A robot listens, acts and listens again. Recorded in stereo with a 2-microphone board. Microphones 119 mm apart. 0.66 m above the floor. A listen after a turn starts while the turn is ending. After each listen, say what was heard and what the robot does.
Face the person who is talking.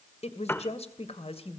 The woman speaking: about 55° left or 125° left. Turn 55° left.
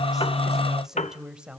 So it is at 10° right. Turn 10° right.
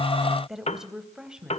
The woman speaking is now 10° right. Turn 10° right.
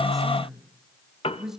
Facing the woman speaking, 2 to 4 m away.